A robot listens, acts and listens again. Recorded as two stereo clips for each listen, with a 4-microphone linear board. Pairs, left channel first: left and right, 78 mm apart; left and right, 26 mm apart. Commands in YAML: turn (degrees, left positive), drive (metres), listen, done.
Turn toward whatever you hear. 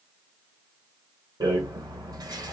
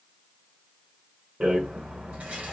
turn: -75
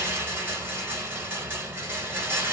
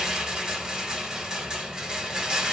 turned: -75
turn: -25
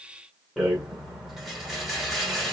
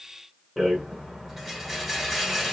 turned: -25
done: "Found it: a rattle, straight ahead, 1 to 2 m away."